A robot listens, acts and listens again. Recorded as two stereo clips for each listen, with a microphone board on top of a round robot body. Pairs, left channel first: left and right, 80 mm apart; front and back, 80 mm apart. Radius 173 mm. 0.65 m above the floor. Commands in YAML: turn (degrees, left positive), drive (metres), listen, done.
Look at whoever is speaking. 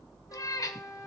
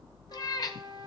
listen: true
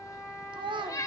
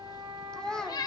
turn: -80
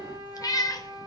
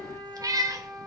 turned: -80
listen: true
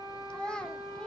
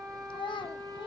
turn: 10
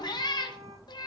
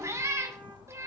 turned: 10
listen: true
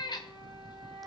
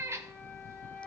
listen: true
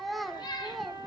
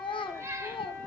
done: "Facing the child speaking."